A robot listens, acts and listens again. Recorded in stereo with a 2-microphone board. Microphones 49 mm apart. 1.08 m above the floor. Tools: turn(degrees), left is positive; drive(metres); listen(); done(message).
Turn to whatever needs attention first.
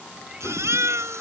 turn(degrees=-90)
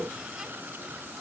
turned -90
listen()
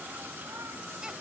listen()
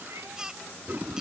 turn(degrees=-15)
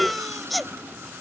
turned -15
done("Facing the baby crying.")